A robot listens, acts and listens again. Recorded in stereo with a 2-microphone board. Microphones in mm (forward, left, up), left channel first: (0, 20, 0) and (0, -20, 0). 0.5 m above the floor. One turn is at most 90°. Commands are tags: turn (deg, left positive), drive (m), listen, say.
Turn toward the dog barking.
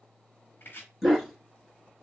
<turn deg="30"/>
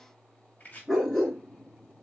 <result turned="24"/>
<turn deg="30"/>
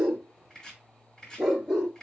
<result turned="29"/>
<turn deg="30"/>
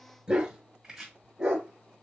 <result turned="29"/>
<turn deg="-25"/>
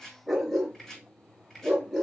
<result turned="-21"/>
<say>Found it: a dog barking, straight ahead, 2 to 4 m away.</say>